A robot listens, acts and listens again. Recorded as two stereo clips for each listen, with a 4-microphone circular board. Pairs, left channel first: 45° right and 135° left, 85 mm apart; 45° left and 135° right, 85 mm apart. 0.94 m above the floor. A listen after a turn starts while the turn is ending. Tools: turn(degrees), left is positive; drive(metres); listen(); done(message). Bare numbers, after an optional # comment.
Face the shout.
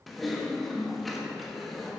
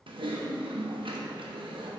listen()
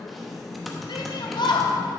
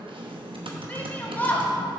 # The shout: 25° right.
turn(-25)
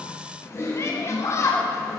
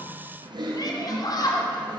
# The shout is now 10° left.
turn(10)
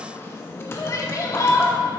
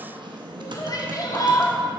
done("Found it: a shout, straight ahead.")